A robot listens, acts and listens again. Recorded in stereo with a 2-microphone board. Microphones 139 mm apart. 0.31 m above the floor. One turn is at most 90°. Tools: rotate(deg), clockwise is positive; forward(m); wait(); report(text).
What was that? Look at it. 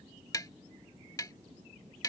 rotate(-30)
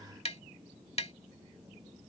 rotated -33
rotate(-90)
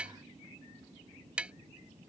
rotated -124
rotate(10)
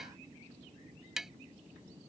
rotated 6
report("Facing the tapping.")